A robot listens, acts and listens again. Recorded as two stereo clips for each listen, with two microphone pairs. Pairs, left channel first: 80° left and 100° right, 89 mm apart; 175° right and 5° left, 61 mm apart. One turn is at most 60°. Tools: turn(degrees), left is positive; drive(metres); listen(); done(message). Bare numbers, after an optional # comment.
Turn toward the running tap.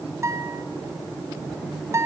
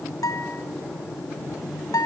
listen()
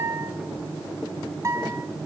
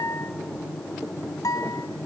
listen()
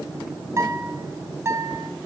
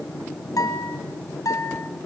done("I can't make out a running tap, only a guitar.")